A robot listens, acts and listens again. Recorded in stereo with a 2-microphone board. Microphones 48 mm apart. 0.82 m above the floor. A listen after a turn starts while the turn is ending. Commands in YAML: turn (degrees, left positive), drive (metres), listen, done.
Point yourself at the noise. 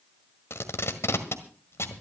turn: 65
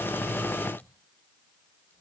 listen: true
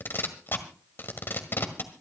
turn: 50
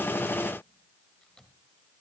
listen: true
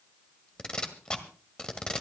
turn: 15
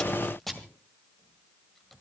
done: "Facing the tape being pulled."